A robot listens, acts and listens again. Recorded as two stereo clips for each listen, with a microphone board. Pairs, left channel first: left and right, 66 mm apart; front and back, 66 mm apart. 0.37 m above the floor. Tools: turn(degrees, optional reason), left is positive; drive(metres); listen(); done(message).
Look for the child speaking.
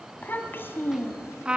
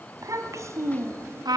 turn(degrees=135, reason="The child speaking: 135° left.")
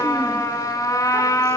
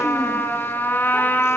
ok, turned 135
listen()
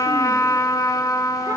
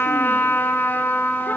listen()
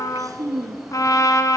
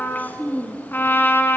turn(degrees=-65, reason="The child speaking is now 65° right.")
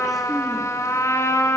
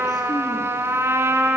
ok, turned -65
listen()
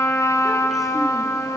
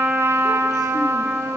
listen()
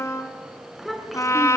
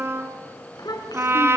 done("Found it: a child speaking, straight ahead, 2 to 4 m away.")